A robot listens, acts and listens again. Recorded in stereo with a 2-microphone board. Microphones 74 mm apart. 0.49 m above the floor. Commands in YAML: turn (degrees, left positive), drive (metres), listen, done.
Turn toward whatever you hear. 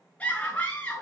turn: 20
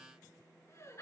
turn: 140
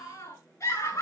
turn: 45
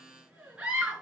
turn: -15
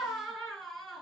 done: "Found it: a scream, straight ahead."